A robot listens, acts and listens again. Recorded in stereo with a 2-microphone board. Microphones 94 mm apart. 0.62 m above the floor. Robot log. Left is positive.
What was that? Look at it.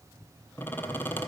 note: The squeak: about 20° left or 160° left.
cmd yaw +20
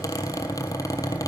note: So it is at 135° left.
cmd yaw +135
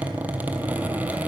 note: The squeak is now 20° right.
cmd yaw -20
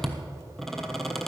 end: Facing the squeak.